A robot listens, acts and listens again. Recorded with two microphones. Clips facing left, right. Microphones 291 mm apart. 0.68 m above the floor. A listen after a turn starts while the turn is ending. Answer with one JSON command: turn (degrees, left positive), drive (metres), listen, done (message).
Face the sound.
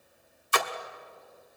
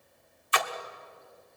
{"turn": 50}
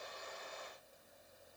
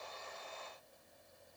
{"listen": true}
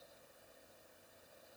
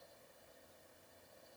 {"done": "I heard a splash, but can't make it out now. It was about straight ahead or 80° left."}